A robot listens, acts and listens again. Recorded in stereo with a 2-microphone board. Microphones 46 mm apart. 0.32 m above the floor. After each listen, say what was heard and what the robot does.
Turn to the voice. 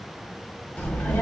The child speaking: about 25° left or 155° left. Turn 25° left.
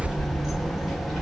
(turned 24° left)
Found it: a child speaking, straight ahead.